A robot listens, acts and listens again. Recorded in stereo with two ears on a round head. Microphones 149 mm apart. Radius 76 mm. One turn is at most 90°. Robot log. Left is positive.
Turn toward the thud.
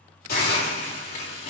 cmd idle
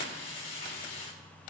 cmd idle
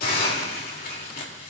end: I can't make out a thud, only a hiss.